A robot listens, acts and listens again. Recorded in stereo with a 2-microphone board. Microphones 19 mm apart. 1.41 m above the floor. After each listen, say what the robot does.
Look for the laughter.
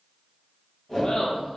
Turn 55° left.
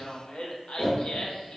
Turn 70° left.
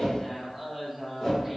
Found it: laughter, straight ahead, 1 to 2 m away.